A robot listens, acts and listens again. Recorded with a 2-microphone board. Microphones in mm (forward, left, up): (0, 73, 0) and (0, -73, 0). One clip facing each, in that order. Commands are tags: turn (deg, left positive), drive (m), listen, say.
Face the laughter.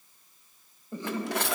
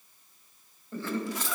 <turn deg="20"/>
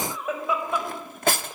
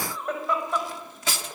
<turn deg="30"/>
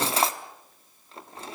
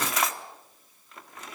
<listen/>
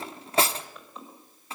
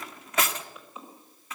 <say>Facing the laughter, over 4 m away.</say>